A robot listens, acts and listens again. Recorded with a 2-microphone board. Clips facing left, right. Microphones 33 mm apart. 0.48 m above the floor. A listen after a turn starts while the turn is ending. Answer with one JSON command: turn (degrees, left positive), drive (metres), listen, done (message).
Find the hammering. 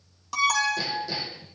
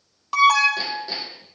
{"turn": -45}
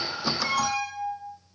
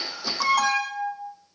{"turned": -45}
{"listen": true}
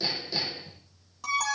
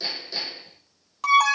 {"done": "Found it: hammering, straight ahead."}